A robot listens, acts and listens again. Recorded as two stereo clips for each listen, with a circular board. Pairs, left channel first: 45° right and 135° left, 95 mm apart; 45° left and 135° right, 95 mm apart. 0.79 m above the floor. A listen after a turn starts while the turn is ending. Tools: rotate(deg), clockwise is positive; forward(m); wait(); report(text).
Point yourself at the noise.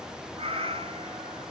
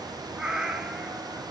rotate(-145)
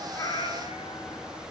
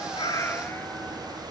wait()
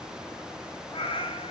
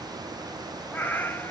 rotate(25)
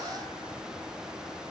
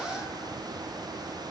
wait()
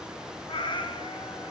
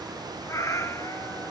rotate(15)
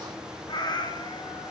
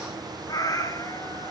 report("Found it: a cat meowing, straight ahead, 1 to 2 m away.")